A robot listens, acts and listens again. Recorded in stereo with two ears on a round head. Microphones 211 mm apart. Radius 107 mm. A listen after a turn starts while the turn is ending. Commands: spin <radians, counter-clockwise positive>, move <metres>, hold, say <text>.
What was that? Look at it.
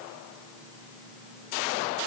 hold
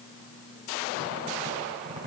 spin -0.44
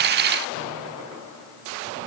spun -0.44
spin -2.27
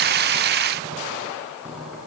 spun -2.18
say Facing the squeak.